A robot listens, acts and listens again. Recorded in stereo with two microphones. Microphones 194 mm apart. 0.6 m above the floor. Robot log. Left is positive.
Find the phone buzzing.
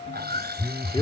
note: The phone buzzing: about 15° right or 165° right.
cmd yaw -15
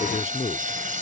cmd idle
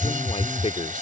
note: So it is at 150° right.
cmd yaw -150
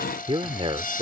cmd idle
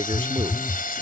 note: The phone buzzing is now 25° left.
cmd yaw +25
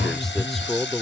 end: Found it: a phone buzzing, straight ahead.